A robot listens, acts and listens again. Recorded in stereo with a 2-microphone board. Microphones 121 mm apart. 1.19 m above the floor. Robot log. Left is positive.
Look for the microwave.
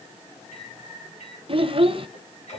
cmd yaw +90
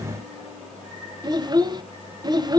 end: Found it: a microwave, straight ahead.